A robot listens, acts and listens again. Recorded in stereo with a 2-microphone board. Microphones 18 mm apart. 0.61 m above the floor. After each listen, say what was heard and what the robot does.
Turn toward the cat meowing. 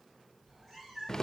The cat meowing: about 25° right or 155° right. Turn 25° right.
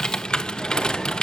Keep listening.
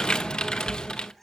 Found it: a cat meowing, straight ahead, 2 to 4 m away.